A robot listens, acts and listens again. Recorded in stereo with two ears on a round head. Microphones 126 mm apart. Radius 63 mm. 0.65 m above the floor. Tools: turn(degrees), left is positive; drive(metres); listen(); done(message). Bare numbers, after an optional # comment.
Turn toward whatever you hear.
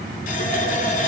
# The running tap: about 65° left or 115° left.
turn(65)
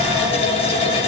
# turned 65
# So it is at 45° left.
turn(45)
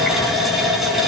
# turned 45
done("Found it: a running tap, straight ahead, over 4 m away.")